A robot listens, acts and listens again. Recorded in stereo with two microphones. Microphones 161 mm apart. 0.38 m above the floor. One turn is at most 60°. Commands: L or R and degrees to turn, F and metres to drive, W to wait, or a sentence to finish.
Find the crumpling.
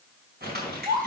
R60
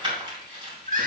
R30
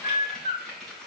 Facing the crumpling, 2 to 4 m away.